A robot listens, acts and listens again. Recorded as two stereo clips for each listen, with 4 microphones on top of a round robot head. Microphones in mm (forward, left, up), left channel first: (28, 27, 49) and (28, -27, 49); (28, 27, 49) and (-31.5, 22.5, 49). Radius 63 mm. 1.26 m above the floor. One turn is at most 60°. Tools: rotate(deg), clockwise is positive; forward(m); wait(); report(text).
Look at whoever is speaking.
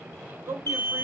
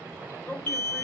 rotate(55)
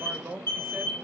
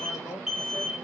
rotate(15)
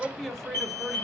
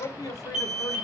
report("Facing the man speaking.")